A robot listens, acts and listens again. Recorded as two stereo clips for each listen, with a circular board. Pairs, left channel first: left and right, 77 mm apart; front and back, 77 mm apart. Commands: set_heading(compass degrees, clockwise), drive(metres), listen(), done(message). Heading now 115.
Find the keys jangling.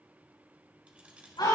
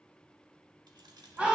set_heading(280)
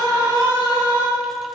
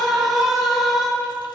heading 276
listen()
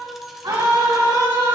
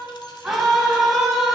listen()
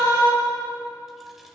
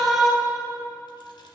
done("Facing where the keys jangling came from. I can't hear it now.")